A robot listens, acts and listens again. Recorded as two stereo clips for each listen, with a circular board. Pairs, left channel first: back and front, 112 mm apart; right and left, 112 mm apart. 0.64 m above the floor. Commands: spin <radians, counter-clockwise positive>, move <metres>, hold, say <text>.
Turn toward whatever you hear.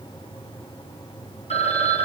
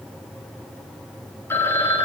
spin -2.79
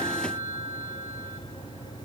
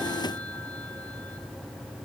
spin -1.22
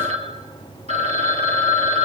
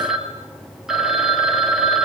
say Found it: a phone ringing, straight ahead, 2 to 4 m away.